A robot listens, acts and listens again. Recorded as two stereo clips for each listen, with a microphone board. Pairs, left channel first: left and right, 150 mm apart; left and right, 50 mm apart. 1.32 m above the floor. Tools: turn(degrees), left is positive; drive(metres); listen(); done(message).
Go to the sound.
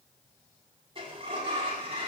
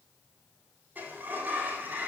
turn(degrees=-35)
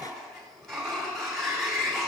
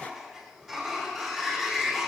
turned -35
drive(metres=1.0)
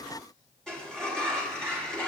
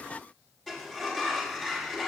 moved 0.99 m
drive(metres=1.0)
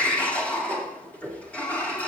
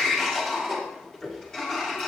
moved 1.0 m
turn(degrees=10)
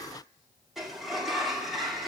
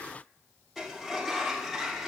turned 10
drive(metres=1.0)
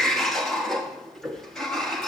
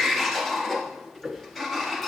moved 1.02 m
drive(metres=1.0)
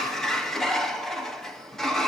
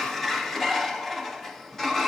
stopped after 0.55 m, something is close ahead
done("I am next to the sliding door.")